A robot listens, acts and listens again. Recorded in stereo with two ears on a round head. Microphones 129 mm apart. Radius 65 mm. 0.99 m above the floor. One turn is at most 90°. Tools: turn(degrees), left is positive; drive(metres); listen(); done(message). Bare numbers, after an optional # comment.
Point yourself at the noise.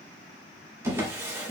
# The drawer: about 15° right or 165° right.
turn(-15)
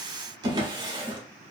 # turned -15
# So it is at 150° right.
turn(-90)
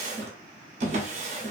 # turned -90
# The drawer is now 55° right.
turn(-55)
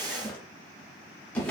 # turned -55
# The drawer is now 10° left.
turn(10)
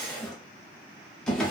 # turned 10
done("Facing the drawer, under 1 m away.")